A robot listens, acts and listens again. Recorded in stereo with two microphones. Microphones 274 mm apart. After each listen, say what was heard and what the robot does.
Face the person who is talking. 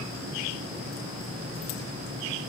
Keep listening.
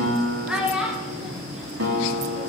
Turn 30° right.
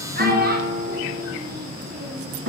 So it is at 145° right. Turn 145° right.
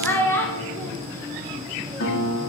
The child speaking is now 10° left. Turn 10° left.
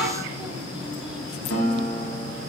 Facing the child speaking, 1 to 2 m away.